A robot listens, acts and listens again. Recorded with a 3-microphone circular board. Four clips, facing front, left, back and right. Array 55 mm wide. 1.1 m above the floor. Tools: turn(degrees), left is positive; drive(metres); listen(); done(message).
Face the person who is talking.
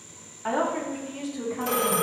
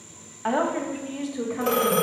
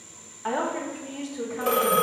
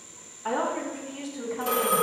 turn(degrees=105)
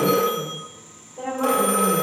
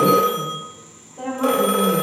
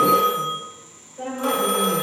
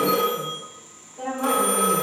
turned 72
turn(degrees=45)
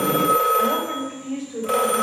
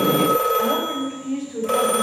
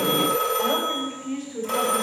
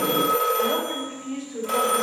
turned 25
turn(degrees=25)
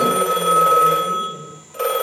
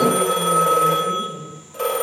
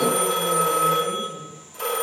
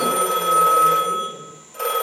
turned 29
listen()
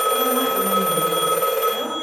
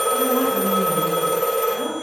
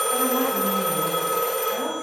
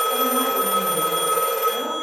listen()
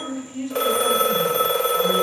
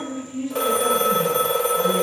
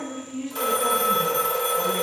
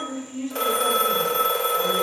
done("Found it: a woman speaking, straight ahead, over 4 m away.")